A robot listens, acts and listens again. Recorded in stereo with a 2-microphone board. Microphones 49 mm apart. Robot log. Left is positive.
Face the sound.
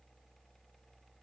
cmd idle
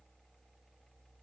cmd idle
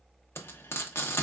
note: The frying: about 55° left or 125° left.
cmd yaw +55
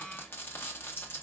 note: So it is at 55° left.
cmd yaw +55
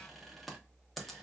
end: Facing the frying.